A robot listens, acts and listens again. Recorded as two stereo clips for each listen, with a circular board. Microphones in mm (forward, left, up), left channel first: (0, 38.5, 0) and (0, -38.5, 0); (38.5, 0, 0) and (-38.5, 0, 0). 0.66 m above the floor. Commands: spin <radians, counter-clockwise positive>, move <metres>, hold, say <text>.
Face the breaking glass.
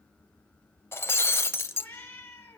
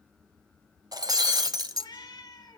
spin 2.62
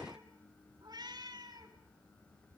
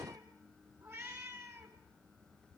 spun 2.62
say I heard breaking glass from this way, but can't make it out now.